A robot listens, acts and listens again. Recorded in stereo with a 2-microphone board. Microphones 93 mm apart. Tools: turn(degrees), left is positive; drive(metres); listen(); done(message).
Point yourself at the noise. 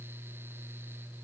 listen()
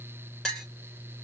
turn(degrees=30)
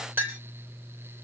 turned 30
turn(degrees=-25)
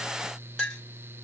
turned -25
done("Found it: a clink, straight ahead, 2 to 4 m away.")